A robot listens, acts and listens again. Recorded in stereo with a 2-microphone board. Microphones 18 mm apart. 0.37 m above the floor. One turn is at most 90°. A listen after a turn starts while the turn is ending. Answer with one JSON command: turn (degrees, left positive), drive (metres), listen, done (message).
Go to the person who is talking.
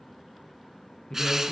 {"turn": 50}
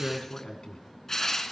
{"turn": 70}
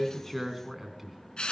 {"turn": -10}
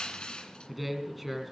{"drive": 1.0}
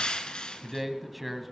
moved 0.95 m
{"drive": 1.0}
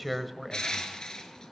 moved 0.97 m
{"drive": 1.0}
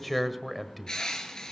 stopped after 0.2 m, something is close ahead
{"done": "Arrived at the man speaking, straight ahead."}